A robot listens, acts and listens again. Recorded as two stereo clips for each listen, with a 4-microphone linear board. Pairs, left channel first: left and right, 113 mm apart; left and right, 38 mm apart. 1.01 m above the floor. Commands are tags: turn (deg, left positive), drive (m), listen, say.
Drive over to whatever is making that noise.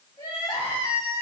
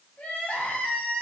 <turn deg="30"/>
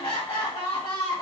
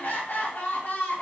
<turn deg="115"/>
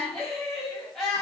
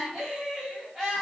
<drive m="1.0"/>
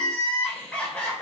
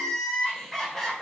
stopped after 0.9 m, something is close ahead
<turn deg="10"/>
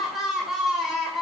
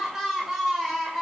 <say>I am next to the crying.</say>